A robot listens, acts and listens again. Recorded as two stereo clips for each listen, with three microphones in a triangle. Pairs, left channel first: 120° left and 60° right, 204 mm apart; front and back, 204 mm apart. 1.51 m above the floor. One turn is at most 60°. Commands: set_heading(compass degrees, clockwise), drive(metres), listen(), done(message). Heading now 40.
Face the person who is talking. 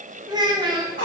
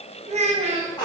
set_heading(100)
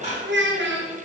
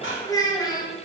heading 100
set_heading(160)
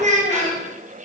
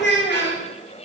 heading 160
set_heading(170)
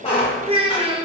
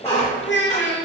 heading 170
done("Facing the child speaking.")